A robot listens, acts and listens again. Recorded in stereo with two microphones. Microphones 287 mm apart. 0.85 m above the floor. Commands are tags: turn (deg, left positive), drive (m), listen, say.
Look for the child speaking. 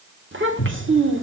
<turn deg="-45"/>
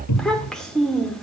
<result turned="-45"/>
<say>Found it: a child speaking, straight ahead.</say>